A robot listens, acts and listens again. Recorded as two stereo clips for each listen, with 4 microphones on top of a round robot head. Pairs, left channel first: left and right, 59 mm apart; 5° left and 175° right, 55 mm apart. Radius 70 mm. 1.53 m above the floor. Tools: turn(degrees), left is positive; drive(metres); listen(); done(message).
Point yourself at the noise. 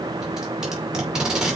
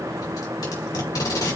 turn(degrees=-10)
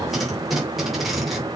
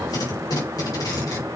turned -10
done("Facing the tape being pulled.")